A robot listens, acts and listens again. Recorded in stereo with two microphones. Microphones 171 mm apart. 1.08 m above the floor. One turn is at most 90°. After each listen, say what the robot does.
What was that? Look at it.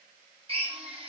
Turn 35° right.
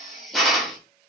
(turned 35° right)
Found it: a drill, straight ahead, 1 to 2 m away.